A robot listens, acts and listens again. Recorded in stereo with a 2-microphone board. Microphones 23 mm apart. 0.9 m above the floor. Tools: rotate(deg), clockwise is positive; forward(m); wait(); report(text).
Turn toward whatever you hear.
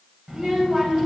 rotate(35)
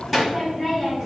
report("Found it: a child speaking, straight ahead, 2 to 4 m away.")